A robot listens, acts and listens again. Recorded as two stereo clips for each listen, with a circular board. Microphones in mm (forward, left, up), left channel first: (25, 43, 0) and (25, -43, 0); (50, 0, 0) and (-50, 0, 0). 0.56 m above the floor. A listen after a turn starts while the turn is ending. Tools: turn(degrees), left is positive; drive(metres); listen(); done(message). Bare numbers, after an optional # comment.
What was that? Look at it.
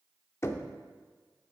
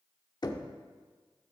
# The knocking: 35° left.
turn(35)
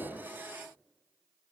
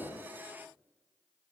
listen()
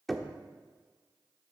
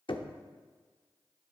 done("Facing the knocking, under 1 m away.")